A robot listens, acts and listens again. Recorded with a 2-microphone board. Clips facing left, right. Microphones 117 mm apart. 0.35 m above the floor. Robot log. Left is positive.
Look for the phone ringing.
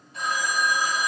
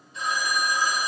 note: The phone ringing: about 65° left or 115° left.
cmd yaw +65
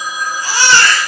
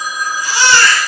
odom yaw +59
note: So it is at 30° left.
cmd yaw +30
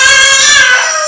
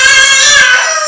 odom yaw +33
cmd idle
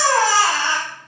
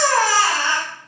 cmd idle
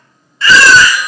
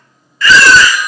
end: I heard a phone ringing from this way, but can't make it out now.